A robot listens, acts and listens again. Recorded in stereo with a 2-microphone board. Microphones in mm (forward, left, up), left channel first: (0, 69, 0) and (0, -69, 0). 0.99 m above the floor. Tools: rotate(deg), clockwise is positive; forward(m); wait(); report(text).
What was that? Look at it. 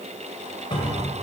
rotate(-35)
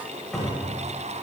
report("Found it: a cupboard door, straight ahead, 2 to 4 m away.")